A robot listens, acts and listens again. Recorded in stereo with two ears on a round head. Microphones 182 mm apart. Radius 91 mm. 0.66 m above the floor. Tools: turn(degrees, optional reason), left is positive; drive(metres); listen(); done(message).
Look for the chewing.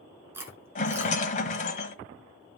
turn(degrees=-30)
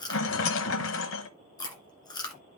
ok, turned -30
turn(degrees=20, reason="So it is at 20° left.")
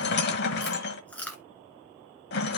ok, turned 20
done("Found it: chewing, straight ahead, 1 to 2 m away.")